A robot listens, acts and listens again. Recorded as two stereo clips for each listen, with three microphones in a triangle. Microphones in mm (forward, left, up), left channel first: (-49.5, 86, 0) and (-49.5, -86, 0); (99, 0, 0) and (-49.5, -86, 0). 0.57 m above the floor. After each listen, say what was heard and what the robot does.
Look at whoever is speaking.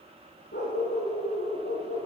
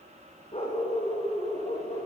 Keep listening.
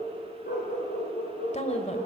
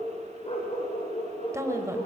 The woman speaking: 140° left. Turn 140° left.
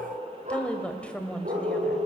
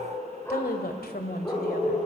The woman speaking is now 10° left. Turn 10° left.
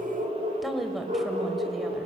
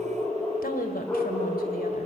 Found it: a woman speaking, straight ahead.